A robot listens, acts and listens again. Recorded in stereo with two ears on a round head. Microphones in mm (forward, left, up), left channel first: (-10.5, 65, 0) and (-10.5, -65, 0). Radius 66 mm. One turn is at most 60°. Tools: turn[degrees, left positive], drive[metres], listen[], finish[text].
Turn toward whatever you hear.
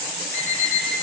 Thought: The alarm clock: about 20° left or 160° left.
Action: turn[20]
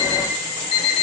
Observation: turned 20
Thought: So it is at 140° left.
Action: turn[60]
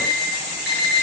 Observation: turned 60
Thought: The alarm clock is now 70° left.
Action: turn[60]
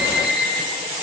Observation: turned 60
Thought: The alarm clock is now 30° left.
Action: turn[30]
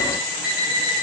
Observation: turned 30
Thought: The alarm clock is now 10° right.
Action: turn[-10]
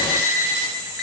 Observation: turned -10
Action: finish[Facing the alarm clock.]